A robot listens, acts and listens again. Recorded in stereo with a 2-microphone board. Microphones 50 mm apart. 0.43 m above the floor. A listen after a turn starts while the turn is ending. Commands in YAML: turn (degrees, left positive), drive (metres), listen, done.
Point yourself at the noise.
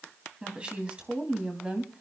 turn: -20
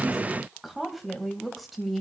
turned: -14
turn: 30
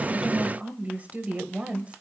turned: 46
turn: -25
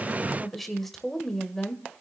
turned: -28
turn: 10
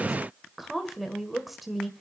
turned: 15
done: "Found it: a woman speaking, straight ahead."